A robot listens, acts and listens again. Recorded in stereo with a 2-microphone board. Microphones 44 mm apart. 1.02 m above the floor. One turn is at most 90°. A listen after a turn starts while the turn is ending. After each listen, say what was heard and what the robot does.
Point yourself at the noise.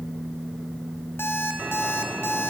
Turn 90° left.
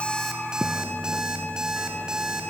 So it is at 15° right. Turn 15° right.
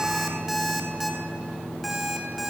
Found it: an alarm clock, straight ahead.